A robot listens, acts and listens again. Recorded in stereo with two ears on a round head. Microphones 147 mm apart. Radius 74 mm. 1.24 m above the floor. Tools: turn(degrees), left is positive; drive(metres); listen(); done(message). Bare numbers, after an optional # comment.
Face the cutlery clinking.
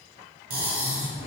# The cutlery clinking: about 55° right or 125° right.
turn(-55)
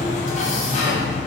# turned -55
listen()
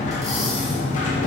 listen()
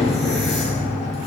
done("I heard cutlery clinking, but can't make it out now. It was about straight ahead or 70° right.")